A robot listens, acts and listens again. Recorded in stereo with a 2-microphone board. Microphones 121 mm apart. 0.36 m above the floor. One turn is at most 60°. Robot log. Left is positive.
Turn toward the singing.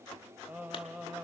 cmd yaw -30
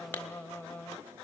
note: So it is at 20° left.
cmd yaw +20
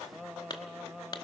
end: Facing the singing.